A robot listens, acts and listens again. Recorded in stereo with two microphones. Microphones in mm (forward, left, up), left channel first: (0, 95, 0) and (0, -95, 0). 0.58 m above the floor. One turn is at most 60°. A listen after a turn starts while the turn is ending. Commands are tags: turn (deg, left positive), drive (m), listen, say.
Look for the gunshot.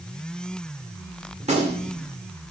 <turn deg="-35"/>
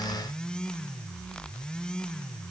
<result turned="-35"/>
<listen/>
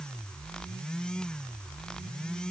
<say>I heard a gunshot, but can't make it out now. It was about straight ahead or 110° right.</say>